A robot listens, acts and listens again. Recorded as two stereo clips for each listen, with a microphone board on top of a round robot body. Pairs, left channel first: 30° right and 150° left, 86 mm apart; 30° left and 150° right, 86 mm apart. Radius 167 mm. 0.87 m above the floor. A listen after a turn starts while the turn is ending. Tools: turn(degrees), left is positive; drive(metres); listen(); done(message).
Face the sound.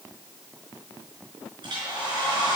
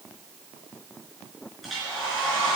turn(degrees=125)
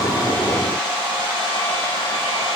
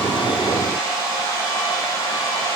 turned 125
turn(degrees=-25)
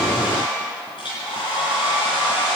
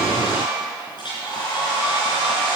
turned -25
done("Facing the hair dryer, over 4 m away.")